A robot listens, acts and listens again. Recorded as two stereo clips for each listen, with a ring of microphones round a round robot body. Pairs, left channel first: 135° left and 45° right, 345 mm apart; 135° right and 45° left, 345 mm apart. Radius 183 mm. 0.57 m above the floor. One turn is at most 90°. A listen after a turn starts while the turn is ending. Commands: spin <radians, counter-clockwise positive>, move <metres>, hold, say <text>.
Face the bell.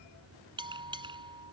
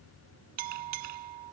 spin 0.52
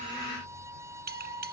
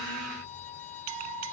spin 0.35
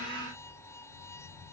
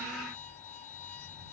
hold
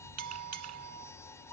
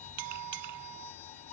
say Found it: a bell, straight ahead.